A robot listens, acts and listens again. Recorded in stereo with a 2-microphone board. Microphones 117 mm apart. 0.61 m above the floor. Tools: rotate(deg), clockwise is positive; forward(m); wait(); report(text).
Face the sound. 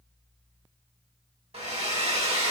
rotate(65)
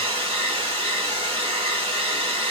rotate(50)
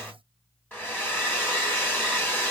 rotate(-15)
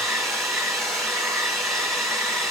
report("Facing the hair dryer, 1 to 2 m away.")